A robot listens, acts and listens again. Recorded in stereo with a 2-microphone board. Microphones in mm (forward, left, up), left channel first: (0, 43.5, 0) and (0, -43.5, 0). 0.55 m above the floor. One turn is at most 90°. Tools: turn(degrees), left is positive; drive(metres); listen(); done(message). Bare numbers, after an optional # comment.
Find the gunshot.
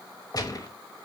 # The gunshot: about 45° left or 135° left.
turn(45)
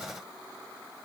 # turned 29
listen()
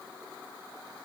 done("I heard a gunshot, but can't make it out now. It was about 15° left or 105° left.")